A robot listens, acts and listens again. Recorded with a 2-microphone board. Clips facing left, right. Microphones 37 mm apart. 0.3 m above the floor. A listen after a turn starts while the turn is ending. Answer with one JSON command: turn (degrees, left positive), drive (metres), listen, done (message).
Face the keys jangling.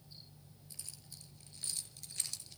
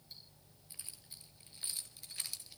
{"turn": -30}
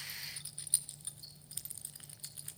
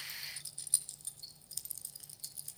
{"turn": 40}
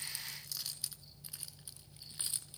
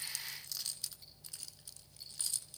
{"turn": 25}
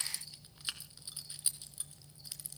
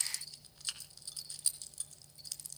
{"turn": 20}
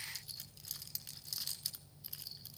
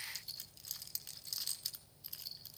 {"done": "Found it: keys jangling, straight ahead, 2 to 4 m away."}